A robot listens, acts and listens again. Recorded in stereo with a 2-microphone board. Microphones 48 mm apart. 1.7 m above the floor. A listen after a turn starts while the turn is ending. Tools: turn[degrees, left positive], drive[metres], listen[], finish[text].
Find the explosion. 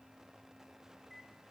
Action: listen[]
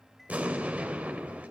Thought: The explosion: about 30° right or 150° right.
Action: turn[-30]
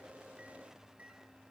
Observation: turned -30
Action: listen[]
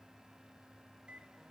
Action: finish[I heard an explosion, but can't make it out now. It was about straight ahead or 120° right.]